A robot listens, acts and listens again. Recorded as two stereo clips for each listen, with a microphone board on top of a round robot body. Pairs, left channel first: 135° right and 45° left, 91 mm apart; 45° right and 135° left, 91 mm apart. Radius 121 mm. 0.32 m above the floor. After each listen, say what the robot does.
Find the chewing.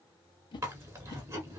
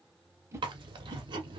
Turn 105° left.
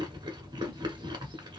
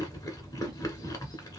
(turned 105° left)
Facing the chewing, 1 to 2 m away.